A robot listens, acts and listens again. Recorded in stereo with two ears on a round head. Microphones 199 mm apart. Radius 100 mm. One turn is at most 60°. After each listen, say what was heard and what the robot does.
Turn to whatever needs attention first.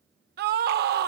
The scream: about 45° right or 135° right. Turn 45° right.
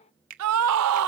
So it is at 85° right. Turn 60° right.
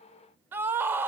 The scream is now 10° right. Turn 10° right.
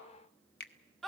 Found it: a scream, straight ahead, under 1 m away.